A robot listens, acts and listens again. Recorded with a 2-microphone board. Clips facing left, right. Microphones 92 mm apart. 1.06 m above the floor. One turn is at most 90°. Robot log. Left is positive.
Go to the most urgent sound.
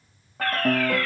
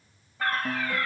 note: The fire alarm: about 20° right or 160° right.
cmd yaw -20
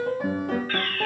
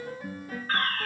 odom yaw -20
note: So it is at 140° right.
cmd yaw -90
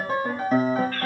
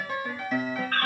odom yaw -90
note: The fire alarm is now 65° right.
cmd yaw -65
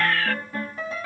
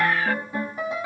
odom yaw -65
note: The fire alarm is now 15° right.
cmd yaw -15
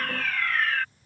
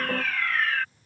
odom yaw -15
cmd fwd 1.0
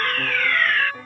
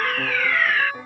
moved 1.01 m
cmd fwd 1.0
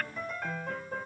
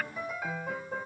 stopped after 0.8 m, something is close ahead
cmd idle
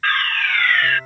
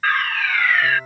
note: The fire alarm is now 10° right.
cmd yaw -10
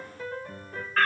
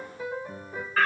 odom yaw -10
end: I am next to the fire alarm.